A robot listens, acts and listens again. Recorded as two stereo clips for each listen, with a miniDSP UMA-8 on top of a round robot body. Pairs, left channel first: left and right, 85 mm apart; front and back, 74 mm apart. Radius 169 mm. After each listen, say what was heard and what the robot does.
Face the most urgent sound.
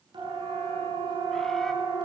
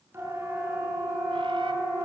The siren: 120° right. Turn 120° right.
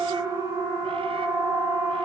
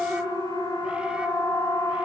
The siren is now 35° right. Turn 35° right.
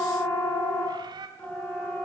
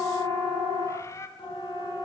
The siren is now 15° left. Turn 15° left.
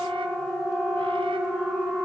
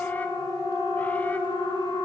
Found it: a siren, straight ahead.